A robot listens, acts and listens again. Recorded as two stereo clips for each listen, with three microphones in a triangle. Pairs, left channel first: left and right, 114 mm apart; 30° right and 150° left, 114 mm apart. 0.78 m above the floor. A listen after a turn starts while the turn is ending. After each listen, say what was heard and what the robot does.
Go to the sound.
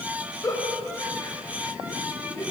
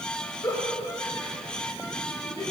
The giggle: 25° left. Turn 25° left.
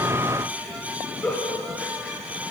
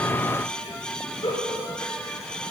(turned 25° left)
The giggle is now 10° left. Turn 10° left.
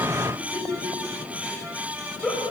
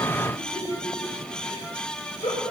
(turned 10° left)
Drive 1.0 m forward.
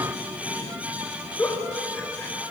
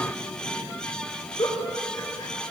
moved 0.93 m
The giggle is now 20° left. Turn 20° left.
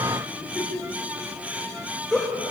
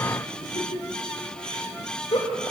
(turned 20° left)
Drive 1.0 m forward.
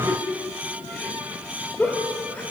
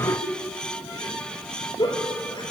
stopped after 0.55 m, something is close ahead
The giggle is now 15° left. Turn 15° left.
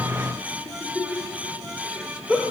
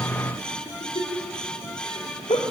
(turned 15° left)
Blocked. The giggle is further on, straight ahead.